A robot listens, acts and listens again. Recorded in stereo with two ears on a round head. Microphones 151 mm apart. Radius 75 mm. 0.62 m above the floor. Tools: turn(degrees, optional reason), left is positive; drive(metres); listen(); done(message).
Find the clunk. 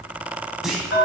turn(degrees=-30)
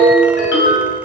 listen()
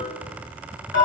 done("I heard a clunk, but can't make it out now. It was about 25° left or 145° right.")